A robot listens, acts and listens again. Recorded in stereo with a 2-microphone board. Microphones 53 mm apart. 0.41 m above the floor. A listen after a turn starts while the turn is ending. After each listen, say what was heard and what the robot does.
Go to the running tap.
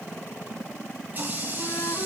The running tap: about 35° right or 145° right. Turn 35° right.
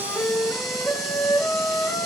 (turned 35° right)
Keep listening.
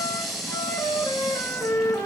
Drive 1.0 m forward.
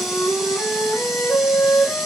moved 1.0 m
Keep listening.
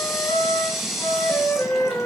Drive 1.0 m forward.
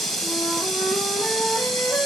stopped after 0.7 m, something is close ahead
The running tap is now 10° left. Turn 10° left.
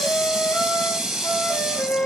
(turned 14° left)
Arrived at the running tap, straight ahead.